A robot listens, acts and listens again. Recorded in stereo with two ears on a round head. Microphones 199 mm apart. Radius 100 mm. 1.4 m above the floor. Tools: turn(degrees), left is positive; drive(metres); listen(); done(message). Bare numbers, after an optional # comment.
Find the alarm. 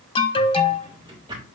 # The alarm: about 25° left or 155° left.
turn(25)
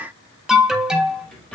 done("Facing the alarm.")